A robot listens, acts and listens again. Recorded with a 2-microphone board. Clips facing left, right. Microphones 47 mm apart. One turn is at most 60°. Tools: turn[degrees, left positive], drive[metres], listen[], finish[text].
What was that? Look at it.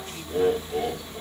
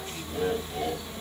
Thought: The laughter: about 40° left or 140° left.
Action: turn[40]
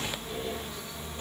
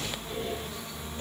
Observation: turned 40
Action: listen[]
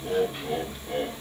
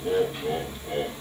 Thought: So it is at 20° right.
Action: turn[-20]
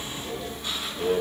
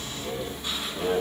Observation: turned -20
Thought: The laughter is now 10° right.
Action: turn[-10]
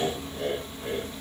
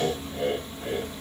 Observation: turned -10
Thought: The laughter is now 10° right.
Action: turn[-10]
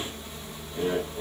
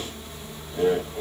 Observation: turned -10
Thought: The laughter is now 10° right.
Action: turn[-10]
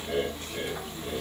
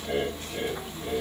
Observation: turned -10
Action: finish[Found it: laughter, straight ahead, 2 to 4 m away.]